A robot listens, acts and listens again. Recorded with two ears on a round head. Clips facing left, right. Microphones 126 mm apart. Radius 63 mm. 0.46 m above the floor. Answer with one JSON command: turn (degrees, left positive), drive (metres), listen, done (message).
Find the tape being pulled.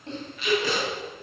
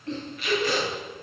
{"turn": 65}
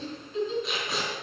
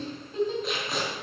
{"done": "Facing the tape being pulled."}